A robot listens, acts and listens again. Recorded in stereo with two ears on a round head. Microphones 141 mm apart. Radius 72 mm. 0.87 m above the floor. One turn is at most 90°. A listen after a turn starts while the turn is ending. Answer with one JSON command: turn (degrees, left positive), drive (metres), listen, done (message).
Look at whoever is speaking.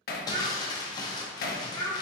{"turn": -70}
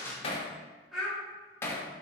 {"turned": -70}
{"done": "Found it: a child speaking, straight ahead, 2 to 4 m away."}